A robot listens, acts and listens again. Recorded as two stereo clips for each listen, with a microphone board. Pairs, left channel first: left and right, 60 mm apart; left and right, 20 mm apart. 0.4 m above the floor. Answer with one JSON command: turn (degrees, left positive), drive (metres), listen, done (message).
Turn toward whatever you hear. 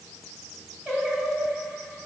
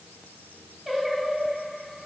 {"turn": -30}
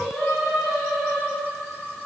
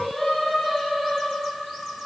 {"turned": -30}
{"turn": 30}
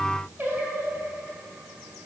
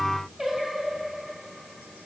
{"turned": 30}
{"turn": -35}
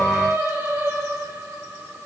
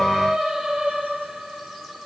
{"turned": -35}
{"turn": -45}
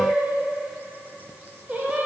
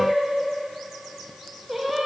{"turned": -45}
{"turn": -20}
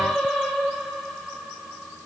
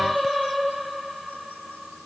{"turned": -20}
{"done": "Facing the singing."}